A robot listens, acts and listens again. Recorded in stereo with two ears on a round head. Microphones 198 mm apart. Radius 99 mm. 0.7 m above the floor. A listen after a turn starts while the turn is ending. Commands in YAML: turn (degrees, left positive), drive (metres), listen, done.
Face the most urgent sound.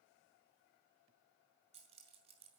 listen: true
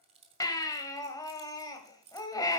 turn: 15
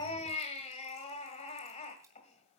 turn: 150
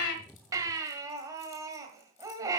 turn: -15
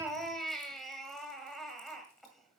done: "Found it: a baby crying, straight ahead, 1 to 2 m away."